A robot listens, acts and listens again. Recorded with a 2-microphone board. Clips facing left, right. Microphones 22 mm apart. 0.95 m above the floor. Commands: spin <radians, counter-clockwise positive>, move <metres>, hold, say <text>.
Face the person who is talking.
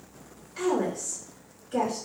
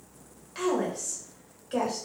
spin -1.13
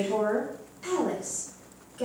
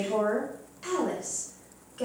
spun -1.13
spin -0.26
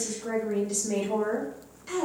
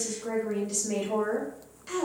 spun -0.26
spin -0.17
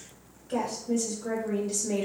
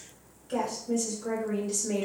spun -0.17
say Found it: a woman speaking, straight ahead.